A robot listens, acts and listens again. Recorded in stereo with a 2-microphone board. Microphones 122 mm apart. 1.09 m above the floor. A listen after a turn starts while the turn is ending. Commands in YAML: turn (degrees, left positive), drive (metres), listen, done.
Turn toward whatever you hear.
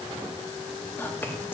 turn: 15
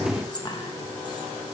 turn: 145
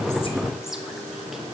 listen: true
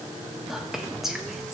done: "Facing the whispering."